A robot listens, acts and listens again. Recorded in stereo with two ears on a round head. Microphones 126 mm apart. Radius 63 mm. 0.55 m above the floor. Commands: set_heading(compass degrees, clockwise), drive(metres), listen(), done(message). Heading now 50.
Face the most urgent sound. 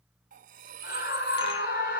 set_heading(320)
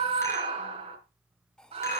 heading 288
set_heading(328)
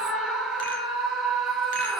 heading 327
done("Found it: a scream, straight ahead.")